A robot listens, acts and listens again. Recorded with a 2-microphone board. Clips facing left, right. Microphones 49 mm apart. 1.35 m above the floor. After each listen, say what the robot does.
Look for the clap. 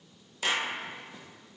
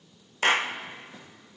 Turn 50° right.
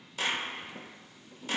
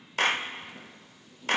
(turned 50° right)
Turn 70° right.
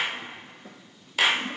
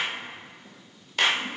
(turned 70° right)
Found it: a clap, straight ahead.